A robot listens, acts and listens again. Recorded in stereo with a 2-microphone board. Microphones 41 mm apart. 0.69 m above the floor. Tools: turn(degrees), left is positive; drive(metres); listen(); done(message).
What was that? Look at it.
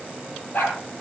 turn(degrees=60)
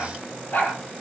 turn(degrees=50)
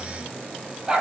turn(degrees=-20)
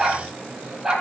turn(degrees=-15)
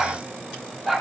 done("Facing the dog barking.")